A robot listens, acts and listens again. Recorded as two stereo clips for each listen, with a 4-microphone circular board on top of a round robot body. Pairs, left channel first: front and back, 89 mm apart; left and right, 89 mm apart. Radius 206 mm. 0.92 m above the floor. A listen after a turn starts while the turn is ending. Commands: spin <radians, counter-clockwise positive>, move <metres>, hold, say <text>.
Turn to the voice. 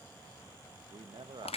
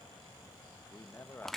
spin 2.71
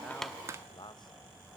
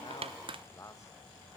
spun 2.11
spin 0.61
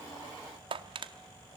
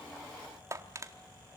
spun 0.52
hold
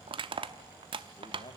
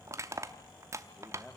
say Found it: a man speaking, straight ahead.